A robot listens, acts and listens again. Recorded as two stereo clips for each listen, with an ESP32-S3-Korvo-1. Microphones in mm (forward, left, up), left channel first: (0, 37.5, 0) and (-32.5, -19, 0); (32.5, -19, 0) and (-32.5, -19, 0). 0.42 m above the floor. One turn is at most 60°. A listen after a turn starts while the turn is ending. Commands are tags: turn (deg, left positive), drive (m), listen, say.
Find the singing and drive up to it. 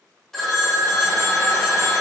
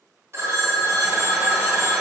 <listen/>
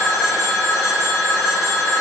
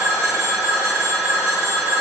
<listen/>
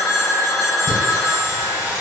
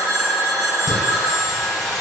<turn deg="-60"/>
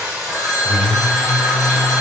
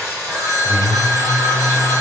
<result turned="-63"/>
<turn deg="-25"/>
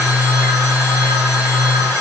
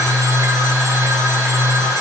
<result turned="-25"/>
<drive m="1.0"/>
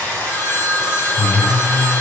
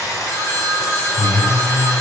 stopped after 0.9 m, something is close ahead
<say>Arrived at the singing, straight ahead.</say>